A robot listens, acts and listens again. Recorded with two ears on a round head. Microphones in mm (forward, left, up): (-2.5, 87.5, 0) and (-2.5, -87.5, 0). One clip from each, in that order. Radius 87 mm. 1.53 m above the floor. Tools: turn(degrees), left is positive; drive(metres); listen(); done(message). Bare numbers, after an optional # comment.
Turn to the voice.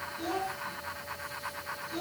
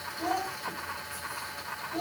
turn(30)
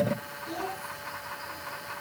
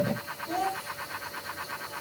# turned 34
# So it is at 25° right.
turn(-25)
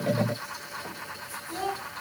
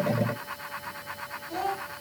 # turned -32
done("Facing the child speaking.")